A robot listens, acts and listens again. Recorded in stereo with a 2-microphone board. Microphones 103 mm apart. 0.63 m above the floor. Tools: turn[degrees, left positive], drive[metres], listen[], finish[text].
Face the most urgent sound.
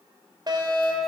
Thought: The fire alarm: about 45° right or 135° right.
Action: turn[-45]
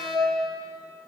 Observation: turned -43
Thought: So it is at 85° right.
Action: turn[-85]
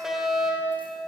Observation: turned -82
Action: finish[Found it: a fire alarm, straight ahead, 2 to 4 m away.]